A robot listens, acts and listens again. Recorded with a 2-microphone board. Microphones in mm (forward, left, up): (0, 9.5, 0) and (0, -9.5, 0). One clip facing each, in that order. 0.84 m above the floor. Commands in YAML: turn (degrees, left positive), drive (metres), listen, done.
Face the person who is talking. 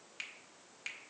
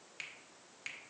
listen: true
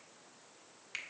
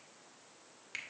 listen: true
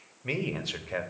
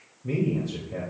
turn: 65
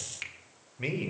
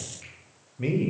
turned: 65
turn: 20
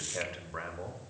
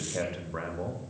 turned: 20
done: "Found it: a man speaking, straight ahead."